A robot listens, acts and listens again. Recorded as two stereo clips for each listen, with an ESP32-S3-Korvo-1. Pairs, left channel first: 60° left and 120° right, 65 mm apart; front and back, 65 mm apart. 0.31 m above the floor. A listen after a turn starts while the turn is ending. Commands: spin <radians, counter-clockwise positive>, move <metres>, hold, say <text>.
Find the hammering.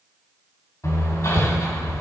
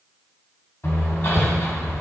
spin 0.70
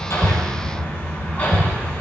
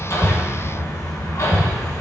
say Found it: hammering, straight ahead, 1 to 2 m away.